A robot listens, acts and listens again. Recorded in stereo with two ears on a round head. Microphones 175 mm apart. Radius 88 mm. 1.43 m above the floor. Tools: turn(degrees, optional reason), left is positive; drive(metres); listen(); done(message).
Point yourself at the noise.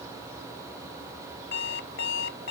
turn(degrees=70, reason="The alarm clock: about 70° left or 110° left.")
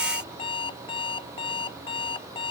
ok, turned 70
turn(degrees=30, reason="So it is at 30° left.")
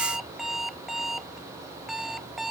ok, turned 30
done("Found it: an alarm clock, straight ahead.")